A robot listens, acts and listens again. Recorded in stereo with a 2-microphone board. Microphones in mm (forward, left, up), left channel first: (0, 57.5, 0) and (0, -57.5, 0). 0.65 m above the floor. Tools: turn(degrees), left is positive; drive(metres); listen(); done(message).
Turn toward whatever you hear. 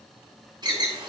turn(degrees=-40)
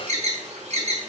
turn(degrees=-100)
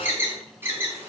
turn(degrees=-20)
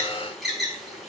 done("Found it: an alarm, straight ahead, 2 to 4 m away.")